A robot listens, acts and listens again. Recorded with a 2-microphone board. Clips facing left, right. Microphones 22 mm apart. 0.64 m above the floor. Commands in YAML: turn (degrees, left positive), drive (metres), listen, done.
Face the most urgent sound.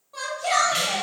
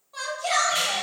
turn: -30
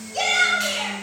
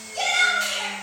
turn: 30
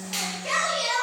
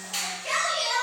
done: "Found it: a shout, straight ahead, 1 to 2 m away."